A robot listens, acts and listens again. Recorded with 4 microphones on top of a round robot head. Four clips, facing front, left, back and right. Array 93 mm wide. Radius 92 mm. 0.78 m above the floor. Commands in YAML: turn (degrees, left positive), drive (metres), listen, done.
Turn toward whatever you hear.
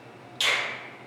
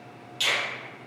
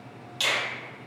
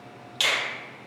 turn: -105
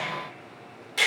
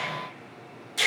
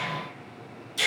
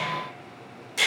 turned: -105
turn: -15
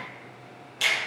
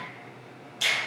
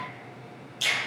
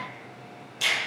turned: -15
done: "Found it: a finger snap, straight ahead, 1 to 2 m away."